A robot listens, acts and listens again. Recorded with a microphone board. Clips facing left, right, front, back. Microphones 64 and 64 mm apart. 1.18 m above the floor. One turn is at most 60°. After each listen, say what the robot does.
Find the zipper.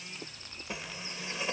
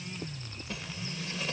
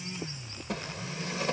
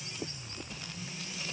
Turn 20° left.
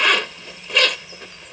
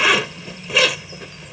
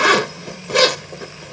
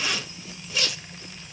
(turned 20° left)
Found it: a zipper, straight ahead.